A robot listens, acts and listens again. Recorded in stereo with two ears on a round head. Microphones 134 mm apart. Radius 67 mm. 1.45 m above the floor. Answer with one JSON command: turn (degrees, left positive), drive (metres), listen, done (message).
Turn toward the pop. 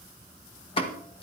{"turn": 40}
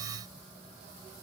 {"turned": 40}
{"listen": true}
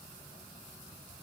{"done": "I heard a pop, but can't make it out now. It was about straight ahead or 100° left."}